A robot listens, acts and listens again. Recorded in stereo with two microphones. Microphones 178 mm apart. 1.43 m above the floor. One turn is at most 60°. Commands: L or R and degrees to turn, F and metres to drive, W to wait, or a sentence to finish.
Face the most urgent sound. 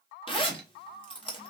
W
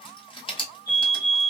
L60
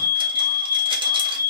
L20
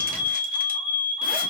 Facing the fire alarm.